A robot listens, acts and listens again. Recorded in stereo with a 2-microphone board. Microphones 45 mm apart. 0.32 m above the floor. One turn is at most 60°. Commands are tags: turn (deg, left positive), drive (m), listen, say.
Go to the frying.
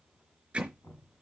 <listen/>
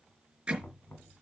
<listen/>
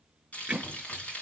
<turn deg="30"/>
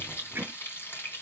<turn deg="60"/>
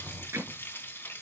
<turn deg="60"/>
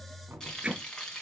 <turn deg="15"/>
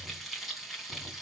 <drive m="1.0"/>
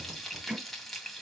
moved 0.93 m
<drive m="1.0"/>
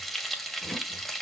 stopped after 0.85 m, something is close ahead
<say>I am next to the frying.</say>